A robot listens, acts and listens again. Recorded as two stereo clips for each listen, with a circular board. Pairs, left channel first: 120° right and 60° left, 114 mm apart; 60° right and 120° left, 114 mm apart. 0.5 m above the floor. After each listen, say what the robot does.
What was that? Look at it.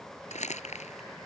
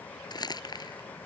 Turn 115° right.
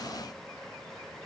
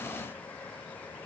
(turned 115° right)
Keep listening.
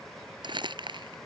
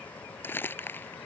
Turn 10° left.
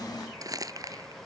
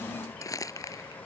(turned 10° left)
Facing the crumpling.